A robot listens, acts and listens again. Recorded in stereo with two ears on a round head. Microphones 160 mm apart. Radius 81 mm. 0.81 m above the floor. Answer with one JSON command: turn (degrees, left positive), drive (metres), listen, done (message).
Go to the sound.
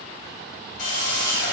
{"turn": 70}
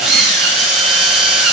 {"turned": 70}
{"drive": 1.0}
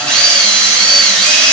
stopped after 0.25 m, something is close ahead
{"done": "Something is in my way. I am facing the drill but have not reached it."}